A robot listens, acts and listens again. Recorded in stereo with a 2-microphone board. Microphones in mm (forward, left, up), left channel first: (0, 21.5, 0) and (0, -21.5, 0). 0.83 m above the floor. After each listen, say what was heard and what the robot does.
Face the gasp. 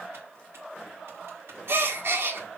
The gasp: about 65° right or 115° right. Turn 65° right.
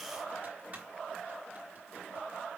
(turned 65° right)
Keep listening.
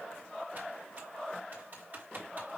I heard a gasp, but can't make it out now. It was about straight ahead or 50° right.